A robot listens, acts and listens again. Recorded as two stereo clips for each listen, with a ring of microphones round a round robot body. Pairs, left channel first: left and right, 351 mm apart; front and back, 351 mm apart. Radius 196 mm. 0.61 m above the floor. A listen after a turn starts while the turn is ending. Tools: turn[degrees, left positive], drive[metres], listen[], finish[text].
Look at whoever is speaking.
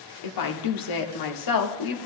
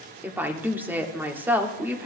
Thought: The woman speaking: 95° left.
Action: turn[95]
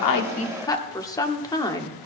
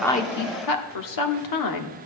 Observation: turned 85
Thought: The woman speaking is now 10° left.
Action: turn[10]
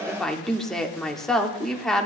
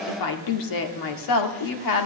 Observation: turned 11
Action: finish[Facing the woman speaking, 1 to 2 m away.]